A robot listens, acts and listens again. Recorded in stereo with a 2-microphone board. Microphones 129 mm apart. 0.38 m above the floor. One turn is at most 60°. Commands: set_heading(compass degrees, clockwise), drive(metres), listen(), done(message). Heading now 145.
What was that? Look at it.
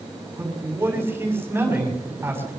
set_heading(165)
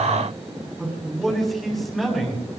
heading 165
done("Found it: a man speaking, straight ahead, over 4 m away.")